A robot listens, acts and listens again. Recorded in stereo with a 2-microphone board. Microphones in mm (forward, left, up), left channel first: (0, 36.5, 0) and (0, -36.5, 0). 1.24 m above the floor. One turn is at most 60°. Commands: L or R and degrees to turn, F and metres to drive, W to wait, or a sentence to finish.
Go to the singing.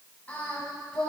L20
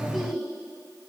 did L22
F1.0
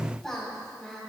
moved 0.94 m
F1.0
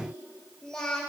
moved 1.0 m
L10
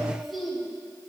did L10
F1.0
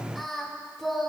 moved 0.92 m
F1.0
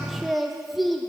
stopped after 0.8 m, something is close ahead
Arrived at the singing, straight ahead.